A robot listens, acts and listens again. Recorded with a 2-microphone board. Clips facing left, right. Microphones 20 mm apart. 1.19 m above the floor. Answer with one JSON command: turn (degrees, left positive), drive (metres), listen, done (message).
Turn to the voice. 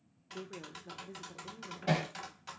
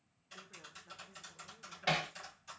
{"turn": 30}
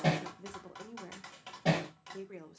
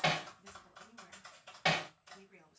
{"turn": 140}
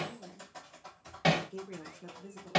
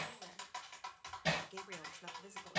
{"turn": -35}
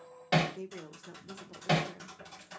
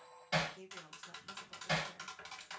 {"turn": 15}
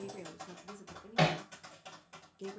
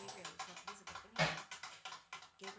{"done": "Facing the woman speaking."}